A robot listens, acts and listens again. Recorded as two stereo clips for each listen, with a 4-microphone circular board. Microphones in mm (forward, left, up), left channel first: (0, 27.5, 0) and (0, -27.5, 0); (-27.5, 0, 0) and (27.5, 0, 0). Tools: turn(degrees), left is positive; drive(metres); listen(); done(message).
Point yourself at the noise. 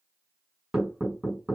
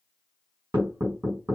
turn(degrees=-20)
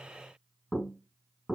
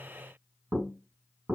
done("Found it: knocking, straight ahead, 1 to 2 m away.")